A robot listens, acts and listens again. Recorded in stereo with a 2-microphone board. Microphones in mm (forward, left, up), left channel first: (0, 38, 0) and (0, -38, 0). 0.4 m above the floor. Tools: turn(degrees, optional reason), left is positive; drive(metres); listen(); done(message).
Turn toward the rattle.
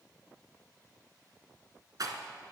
turn(degrees=-60, reason="The rattle: about 60° right or 120° right.")
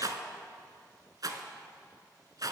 turn(degrees=-60, reason="So it is at 60° right.")
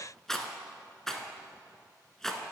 done("Facing the rattle.")